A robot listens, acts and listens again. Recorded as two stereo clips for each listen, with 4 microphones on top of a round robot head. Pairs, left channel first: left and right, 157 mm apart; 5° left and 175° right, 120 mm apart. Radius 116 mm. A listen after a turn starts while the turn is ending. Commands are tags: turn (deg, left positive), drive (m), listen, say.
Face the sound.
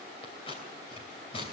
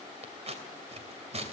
<turn deg="155"/>
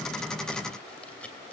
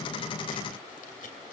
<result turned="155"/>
<say>Found it: scissors, straight ahead.</say>